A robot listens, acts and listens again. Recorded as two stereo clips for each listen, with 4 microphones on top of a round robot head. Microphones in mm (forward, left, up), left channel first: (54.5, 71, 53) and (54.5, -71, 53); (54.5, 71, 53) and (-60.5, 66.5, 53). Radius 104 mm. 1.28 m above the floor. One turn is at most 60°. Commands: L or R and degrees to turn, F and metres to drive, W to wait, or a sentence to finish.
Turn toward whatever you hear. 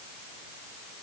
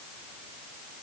W
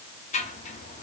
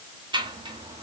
L60
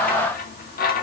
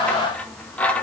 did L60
L60
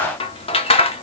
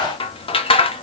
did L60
L40
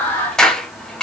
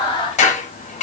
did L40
Facing the scissors.